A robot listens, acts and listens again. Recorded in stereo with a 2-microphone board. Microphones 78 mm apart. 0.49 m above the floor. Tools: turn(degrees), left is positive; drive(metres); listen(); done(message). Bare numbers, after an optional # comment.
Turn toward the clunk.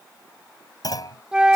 # The clunk: about 55° left or 125° left.
turn(55)
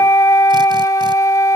listen()
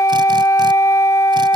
done("I heard a clunk, but can't make it out now. It was about straight ahead or 70° left.")